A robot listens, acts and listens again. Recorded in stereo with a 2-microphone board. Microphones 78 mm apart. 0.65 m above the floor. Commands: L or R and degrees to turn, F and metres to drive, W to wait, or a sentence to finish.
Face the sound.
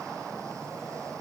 W
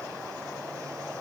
W
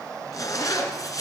L50
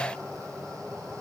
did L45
W
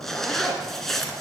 Facing the zipper, 2 to 4 m away.